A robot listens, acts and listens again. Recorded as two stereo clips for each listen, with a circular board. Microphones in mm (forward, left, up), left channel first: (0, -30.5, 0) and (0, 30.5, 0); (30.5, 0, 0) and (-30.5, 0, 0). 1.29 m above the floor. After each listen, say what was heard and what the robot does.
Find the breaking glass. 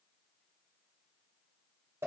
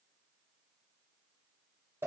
Keep listening.
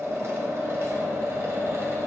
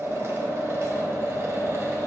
Keep listening.
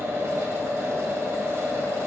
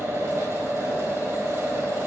I can't make out breaking glass to turn to.